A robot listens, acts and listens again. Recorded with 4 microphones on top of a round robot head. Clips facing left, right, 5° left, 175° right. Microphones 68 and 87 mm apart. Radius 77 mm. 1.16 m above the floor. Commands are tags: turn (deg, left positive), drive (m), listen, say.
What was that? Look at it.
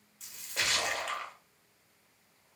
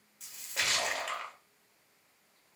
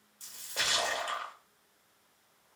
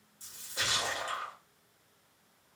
<say>Facing the splash, 1 to 2 m away.</say>